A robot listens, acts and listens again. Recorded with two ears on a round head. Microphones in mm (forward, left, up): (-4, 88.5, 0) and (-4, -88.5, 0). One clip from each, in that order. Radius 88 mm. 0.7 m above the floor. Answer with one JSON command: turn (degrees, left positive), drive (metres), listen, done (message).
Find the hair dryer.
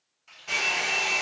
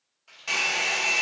{"turn": -45}
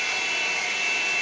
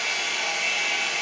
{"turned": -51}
{"turn": -75}
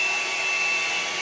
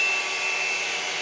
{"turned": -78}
{"done": "Facing the hair dryer, under 1 m away."}